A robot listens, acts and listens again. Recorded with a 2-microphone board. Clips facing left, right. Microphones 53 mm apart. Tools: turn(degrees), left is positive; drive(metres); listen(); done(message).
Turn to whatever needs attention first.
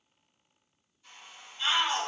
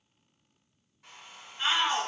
turn(degrees=-45)
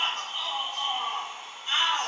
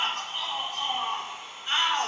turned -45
turn(degrees=-75)
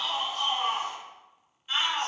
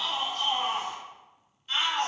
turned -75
turn(degrees=15)
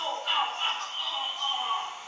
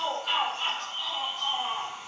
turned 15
done("Facing the shout, 1 to 2 m away.")